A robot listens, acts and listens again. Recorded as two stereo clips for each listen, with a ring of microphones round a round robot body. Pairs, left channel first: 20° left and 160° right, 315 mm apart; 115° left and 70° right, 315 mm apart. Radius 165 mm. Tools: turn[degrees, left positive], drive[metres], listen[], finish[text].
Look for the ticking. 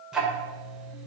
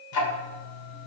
Thought: The ticking: 115° left.
Action: turn[115]
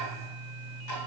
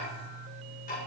Thought: The ticking is now 50° left.
Action: turn[50]
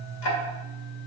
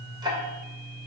Thought: The ticking is now 10° left.
Action: turn[10]
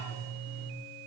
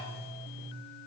Action: finish[Facing the ticking, 1 to 2 m away.]